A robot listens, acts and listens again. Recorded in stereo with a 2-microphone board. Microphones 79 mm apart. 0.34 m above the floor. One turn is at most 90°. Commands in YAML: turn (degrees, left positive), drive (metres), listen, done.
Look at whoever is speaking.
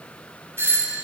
listen: true
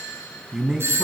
turn: -30
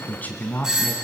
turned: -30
turn: 25
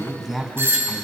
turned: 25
done: "Found it: a man speaking, straight ahead, 2 to 4 m away."